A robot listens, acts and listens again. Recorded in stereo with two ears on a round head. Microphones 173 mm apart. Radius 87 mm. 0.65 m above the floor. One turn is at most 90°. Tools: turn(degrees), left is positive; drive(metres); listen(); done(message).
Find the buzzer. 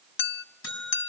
turn(degrees=65)
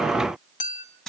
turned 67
done("Facing the buzzer, over 4 m away.")